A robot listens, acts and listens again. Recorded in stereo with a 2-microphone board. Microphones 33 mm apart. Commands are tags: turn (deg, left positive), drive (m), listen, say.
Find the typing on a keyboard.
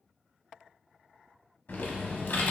<turn deg="75"/>
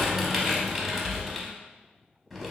<say>Found it: typing on a keyboard, straight ahead.</say>